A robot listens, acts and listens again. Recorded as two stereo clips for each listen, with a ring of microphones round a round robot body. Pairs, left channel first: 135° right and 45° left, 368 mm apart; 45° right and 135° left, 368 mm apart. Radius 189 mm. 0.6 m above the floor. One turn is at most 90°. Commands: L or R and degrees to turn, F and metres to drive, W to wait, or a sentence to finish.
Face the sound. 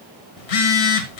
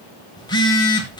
R90
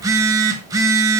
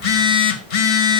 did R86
R35
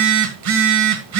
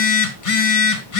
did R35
Facing the phone buzzing.